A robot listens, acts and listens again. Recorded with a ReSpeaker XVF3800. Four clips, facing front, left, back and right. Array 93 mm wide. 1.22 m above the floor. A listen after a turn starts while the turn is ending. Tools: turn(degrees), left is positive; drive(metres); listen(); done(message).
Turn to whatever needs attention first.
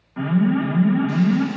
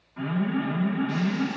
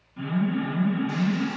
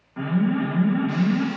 turn(degrees=-35)
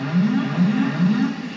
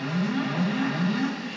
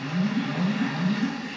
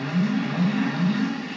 turn(degrees=10)
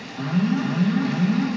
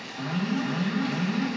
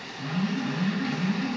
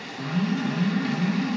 done("Facing the alarm.")